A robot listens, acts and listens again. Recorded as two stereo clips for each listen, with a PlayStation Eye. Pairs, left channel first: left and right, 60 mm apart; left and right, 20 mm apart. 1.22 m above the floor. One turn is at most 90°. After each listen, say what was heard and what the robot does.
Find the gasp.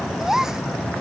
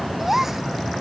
Turn 30° right.
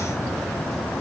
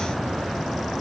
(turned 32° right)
Keep listening.
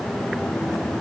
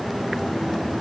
I heard a gasp, but can't make it out now. It was about 25° left or 140° right.